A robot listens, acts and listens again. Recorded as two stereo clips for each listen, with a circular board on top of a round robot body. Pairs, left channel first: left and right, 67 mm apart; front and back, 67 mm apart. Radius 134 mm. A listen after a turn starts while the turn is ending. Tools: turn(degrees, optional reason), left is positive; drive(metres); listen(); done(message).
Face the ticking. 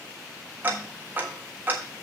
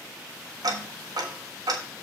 turn(degrees=-155, reason="The ticking: 155° right.")
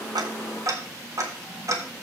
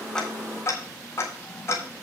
turn(degrees=-50, reason="The ticking is now 50° right.")
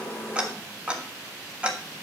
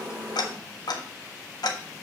turn(degrees=-15, reason="The ticking is now 15° right.")
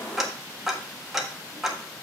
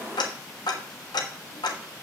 done("Facing the ticking.")